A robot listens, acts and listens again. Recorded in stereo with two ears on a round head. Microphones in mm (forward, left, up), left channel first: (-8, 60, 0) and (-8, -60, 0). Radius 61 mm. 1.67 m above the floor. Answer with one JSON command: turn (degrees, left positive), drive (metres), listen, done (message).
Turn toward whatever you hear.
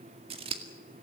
{"turn": -40}
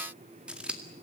{"turn": -10}
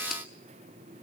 {"listen": true}
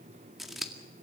{"done": "Found it: scissors, straight ahead."}